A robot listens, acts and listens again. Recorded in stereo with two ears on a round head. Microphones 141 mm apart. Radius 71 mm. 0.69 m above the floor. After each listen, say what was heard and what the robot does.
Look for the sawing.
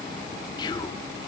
Keep listening.
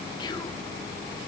Keep listening.
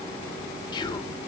I can't make out sawing to turn to.